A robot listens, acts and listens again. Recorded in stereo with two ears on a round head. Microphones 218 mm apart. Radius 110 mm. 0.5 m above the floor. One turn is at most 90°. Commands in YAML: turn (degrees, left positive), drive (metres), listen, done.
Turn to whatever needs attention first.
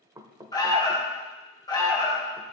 turn: 15
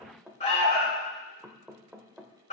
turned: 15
turn: 90
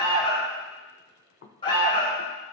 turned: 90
turn: 25
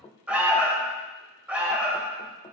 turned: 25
done: "Found it: an alarm, straight ahead."